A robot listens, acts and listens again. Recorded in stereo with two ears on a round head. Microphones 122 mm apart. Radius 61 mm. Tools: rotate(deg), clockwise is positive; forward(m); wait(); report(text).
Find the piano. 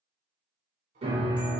rotate(40)
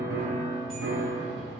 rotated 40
rotate(100)
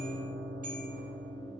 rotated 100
report("Facing the piano.")